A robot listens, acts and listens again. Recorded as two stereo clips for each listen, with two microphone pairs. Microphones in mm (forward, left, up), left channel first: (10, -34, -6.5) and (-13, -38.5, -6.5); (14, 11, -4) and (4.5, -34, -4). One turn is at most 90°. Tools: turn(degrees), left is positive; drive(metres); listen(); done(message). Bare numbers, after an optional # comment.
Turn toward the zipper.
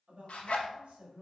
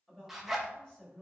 # The zipper: 15° right.
turn(-15)
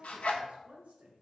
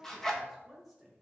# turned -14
done("Facing the zipper.")